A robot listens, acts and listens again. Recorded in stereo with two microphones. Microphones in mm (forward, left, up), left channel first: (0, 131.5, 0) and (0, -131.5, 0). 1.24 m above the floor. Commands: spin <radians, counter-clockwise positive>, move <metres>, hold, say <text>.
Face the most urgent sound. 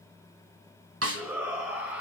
spin -0.52
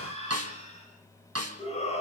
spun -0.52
spin 0.44
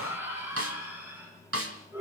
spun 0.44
spin -0.17
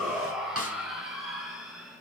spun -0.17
say Facing the shout.